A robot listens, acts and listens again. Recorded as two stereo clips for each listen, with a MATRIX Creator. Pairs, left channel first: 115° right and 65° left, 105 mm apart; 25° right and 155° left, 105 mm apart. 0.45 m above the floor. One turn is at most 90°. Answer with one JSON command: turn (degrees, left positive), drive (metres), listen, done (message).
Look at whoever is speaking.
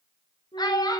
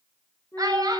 {"turn": -90}
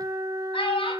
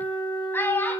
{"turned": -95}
{"turn": -90}
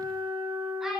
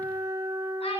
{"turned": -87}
{"turn": -20}
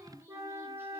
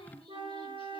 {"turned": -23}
{"listen": true}
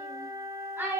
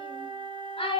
{"done": "Facing the child speaking, over 4 m away."}